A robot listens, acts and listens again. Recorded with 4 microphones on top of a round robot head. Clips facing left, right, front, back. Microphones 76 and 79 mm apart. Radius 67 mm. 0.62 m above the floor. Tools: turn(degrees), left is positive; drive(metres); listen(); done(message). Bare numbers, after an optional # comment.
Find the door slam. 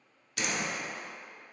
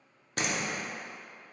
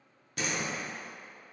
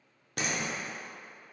# The door slam: 140° right.
turn(-140)
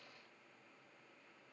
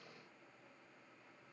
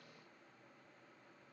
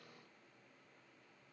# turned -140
done("I heard a door slam from this way, but can't make it out now.")